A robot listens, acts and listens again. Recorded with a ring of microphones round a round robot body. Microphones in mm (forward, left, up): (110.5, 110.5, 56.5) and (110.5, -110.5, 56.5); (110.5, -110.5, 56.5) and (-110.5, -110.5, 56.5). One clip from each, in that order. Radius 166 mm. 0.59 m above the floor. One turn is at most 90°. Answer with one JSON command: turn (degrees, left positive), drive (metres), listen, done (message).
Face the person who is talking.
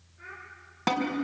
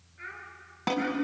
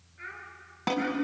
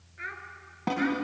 {"turn": -90}
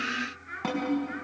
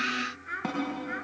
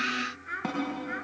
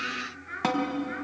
{"turn": -40}
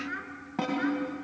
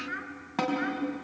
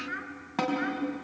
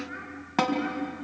{"done": "Facing the child speaking."}